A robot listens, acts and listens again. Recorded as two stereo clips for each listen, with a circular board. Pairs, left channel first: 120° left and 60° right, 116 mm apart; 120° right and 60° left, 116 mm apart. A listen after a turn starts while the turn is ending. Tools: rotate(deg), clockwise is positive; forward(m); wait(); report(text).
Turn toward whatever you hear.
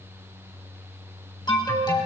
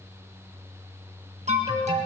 rotate(-70)
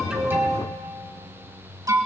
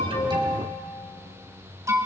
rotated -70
report("Facing the alarm.")